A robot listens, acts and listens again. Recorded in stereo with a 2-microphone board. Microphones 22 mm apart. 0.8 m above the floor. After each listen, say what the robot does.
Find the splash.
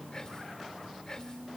Keep listening.
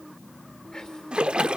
Turn 60° right.
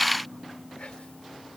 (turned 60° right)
Keep listening.
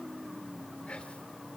I heard a splash, but can't make it out now. It was about straight ahead or 60° right.